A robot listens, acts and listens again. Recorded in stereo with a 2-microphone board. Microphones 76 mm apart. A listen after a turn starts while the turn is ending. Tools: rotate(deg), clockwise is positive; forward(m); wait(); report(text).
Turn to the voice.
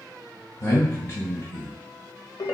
rotate(-35)
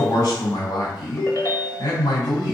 rotate(-105)
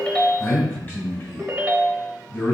rotate(-30)
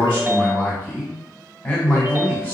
rotate(-20)
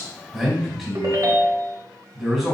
report("Found it: a man speaking, straight ahead.")